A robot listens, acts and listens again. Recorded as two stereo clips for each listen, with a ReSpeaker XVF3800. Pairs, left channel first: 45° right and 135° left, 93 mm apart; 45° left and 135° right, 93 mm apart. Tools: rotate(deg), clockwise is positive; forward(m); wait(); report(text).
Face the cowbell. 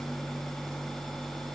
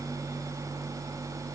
wait()
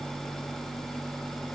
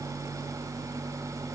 wait()
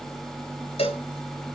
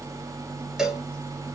rotate(50)
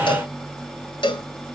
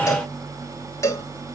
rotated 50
rotate(15)
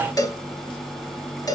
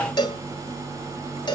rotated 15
report("Facing the cowbell.")